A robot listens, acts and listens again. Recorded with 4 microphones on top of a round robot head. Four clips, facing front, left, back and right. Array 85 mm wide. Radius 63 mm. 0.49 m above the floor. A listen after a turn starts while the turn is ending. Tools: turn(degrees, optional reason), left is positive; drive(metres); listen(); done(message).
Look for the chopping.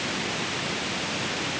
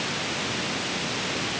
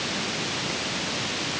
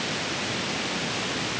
listen()
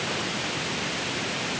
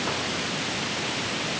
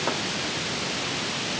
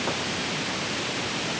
listen()
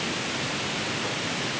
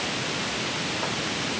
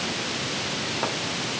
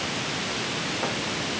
done("I can't make out chopping to turn to.")